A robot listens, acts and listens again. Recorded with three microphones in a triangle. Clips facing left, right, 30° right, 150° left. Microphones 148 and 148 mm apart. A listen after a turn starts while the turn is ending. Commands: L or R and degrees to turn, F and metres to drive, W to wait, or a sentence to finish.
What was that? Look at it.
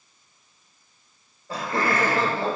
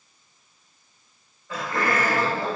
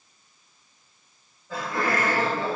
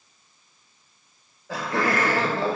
L155
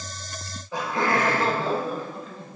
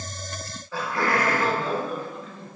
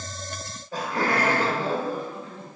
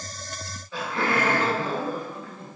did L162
L40
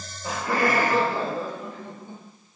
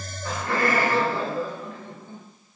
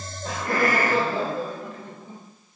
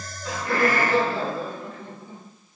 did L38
L20
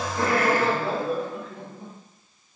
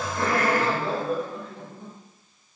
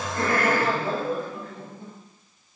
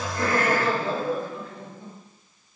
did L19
Facing the laughter.